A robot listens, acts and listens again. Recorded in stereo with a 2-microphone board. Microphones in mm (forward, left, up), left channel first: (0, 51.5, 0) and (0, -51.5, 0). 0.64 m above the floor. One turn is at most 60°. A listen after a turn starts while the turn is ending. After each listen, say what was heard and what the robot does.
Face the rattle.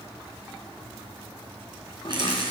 The rattle: about 50° right or 130° right. Turn 50° right.
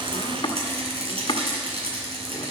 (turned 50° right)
So it is at 80° right. Turn 60° right.
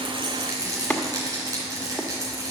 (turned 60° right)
The rattle is now 35° right. Turn 35° right.
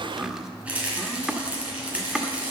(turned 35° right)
The rattle is now 15° right. Turn 15° right.
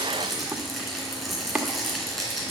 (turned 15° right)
Facing the rattle, 2 to 4 m away.